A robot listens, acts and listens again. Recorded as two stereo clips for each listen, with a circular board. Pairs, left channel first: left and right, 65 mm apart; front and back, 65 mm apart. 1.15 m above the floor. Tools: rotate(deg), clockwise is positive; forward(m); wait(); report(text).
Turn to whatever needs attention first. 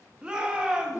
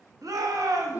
rotate(165)
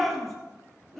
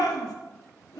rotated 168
report("Found it: a shout, straight ahead, 1 to 2 m away.")